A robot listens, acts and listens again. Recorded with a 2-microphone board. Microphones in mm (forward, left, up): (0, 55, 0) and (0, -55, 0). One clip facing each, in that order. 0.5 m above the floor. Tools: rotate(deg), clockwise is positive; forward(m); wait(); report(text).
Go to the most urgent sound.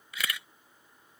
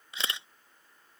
wait()
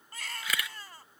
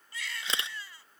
rotate(-45)
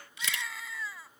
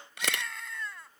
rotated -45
forward(1.0)
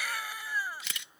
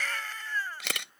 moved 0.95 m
rotate(-10)
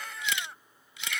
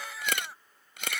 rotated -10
forward(1.0)
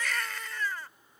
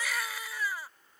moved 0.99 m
rotate(10)
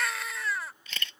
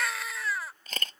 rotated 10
forward(1.0)
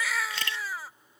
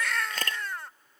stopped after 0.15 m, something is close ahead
report("I am next to the baby crying.")